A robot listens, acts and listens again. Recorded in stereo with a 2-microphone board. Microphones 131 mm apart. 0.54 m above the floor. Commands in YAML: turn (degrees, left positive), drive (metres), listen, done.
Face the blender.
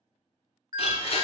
turn: 50
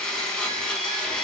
done: "Facing the blender, under 1 m away."